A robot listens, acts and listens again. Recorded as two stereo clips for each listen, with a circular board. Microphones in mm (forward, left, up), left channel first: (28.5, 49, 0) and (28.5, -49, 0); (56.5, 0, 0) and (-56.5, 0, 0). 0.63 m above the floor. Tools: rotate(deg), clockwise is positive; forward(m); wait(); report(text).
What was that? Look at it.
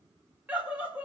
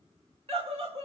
rotate(160)
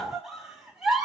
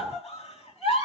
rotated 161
report("Found it: a scream, straight ahead.")